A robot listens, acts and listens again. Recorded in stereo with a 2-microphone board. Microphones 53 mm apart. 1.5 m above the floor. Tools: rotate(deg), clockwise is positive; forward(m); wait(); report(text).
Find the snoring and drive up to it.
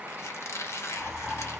rotate(-30)
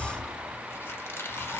rotate(15)
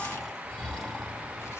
forward(1.0)
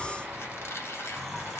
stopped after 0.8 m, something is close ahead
report("Arrived at the snoring, straight ahead.")